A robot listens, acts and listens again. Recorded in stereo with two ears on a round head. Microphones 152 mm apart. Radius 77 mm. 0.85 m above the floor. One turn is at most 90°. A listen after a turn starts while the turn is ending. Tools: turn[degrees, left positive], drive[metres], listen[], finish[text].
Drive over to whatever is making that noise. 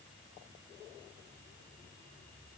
Action: listen[]
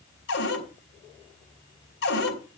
Thought: The cupboard door: about 70° left or 110° left.
Action: turn[70]
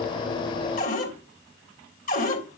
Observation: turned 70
Thought: So it is at 45° left.
Action: turn[45]
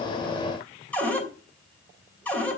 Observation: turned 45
Thought: The cupboard door is now 10° left.
Action: turn[10]
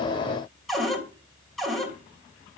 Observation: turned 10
Action: drive[1.0]
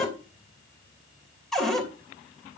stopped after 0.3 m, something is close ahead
Action: finish[Blocked. The cupboard door is further on, straight ahead.]